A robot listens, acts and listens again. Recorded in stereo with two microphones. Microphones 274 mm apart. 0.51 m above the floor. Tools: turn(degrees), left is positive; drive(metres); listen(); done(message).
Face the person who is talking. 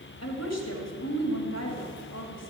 turn(degrees=65)
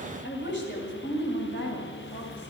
turn(degrees=45)
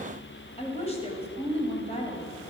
turn(degrees=25)
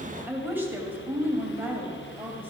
done("Facing the woman speaking.")